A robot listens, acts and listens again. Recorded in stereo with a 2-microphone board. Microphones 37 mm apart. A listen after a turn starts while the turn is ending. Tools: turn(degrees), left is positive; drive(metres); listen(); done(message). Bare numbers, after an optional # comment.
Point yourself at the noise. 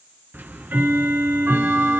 # The ticking: about 70° right or 110° right.
turn(-70)
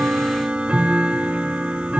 # So it is at 35° right.
turn(-35)
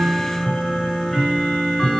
# The ticking is now 10° left.
turn(10)
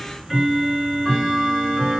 done("Found it: ticking, straight ahead, 2 to 4 m away.")